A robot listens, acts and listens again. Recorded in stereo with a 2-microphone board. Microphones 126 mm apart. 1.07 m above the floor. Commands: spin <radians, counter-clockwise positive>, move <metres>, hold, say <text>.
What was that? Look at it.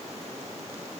hold
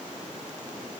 hold
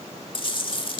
spin 0.70
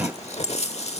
spin 1.57
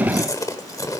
spin 0.52
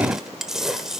say Facing the chewing.